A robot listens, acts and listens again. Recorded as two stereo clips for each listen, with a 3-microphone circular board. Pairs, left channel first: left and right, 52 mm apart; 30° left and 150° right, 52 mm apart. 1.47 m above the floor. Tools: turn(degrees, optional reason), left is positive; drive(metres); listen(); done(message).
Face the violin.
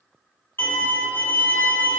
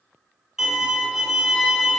turn(degrees=130, reason="The violin: 130° left.")
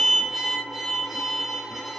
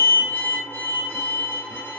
done("Facing the violin.")